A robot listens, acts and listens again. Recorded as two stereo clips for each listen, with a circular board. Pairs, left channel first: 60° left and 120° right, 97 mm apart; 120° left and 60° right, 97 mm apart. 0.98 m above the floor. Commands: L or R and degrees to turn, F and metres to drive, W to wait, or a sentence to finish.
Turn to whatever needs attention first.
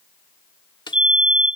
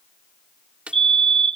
R40
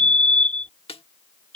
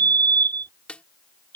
R20
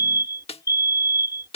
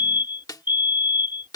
L10
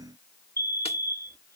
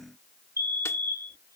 Facing the fire alarm.